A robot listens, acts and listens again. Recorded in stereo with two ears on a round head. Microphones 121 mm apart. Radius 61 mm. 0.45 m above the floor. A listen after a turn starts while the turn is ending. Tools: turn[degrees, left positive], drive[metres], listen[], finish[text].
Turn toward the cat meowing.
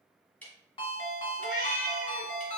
Thought: The cat meowing: about 70° left or 110° left.
Action: turn[70]
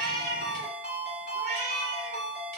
Thought: So it is at 75° left.
Action: turn[75]
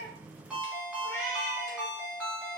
Thought: The cat meowing is now 20° left.
Action: turn[20]
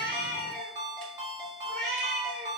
Action: finish[Facing the cat meowing.]